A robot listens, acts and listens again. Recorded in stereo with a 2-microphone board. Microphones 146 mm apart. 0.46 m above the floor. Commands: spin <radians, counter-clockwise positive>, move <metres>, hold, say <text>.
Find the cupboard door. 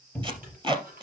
spin 0.52
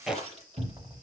spin -0.35
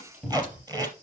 say Found it: a cupboard door, straight ahead.